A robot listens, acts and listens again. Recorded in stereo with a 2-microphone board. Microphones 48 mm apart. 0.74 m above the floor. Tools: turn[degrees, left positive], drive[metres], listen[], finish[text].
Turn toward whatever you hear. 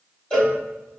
Thought: The cowbell: about 20° left or 160° left.
Action: turn[20]
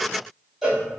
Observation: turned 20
Action: finish[Facing the cowbell, 1 to 2 m away.]